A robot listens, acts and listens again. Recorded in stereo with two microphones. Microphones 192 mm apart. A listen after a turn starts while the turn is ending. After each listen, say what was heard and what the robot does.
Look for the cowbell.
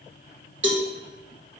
Turn 90° right.
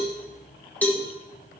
So it is at 10° left. Turn 10° left.
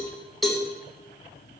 Found it: a cowbell, straight ahead, 1 to 2 m away.